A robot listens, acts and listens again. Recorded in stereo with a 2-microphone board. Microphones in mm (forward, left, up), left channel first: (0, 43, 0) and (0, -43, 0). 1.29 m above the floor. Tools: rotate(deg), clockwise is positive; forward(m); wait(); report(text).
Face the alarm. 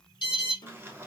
rotate(-60)
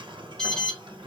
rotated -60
rotate(-10)
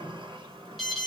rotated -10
report("Facing the alarm.")